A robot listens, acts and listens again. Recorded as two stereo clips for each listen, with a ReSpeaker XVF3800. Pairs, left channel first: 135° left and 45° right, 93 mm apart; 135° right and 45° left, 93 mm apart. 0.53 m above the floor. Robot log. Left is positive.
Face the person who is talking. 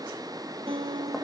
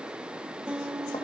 cmd idle
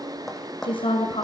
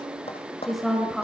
note: The woman speaking: 135° left.
cmd yaw +135
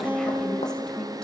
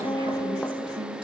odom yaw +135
note: The woman speaking is now 55° left.
cmd yaw +55
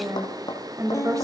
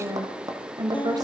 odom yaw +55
end: Found it: a woman speaking, straight ahead, 2 to 4 m away.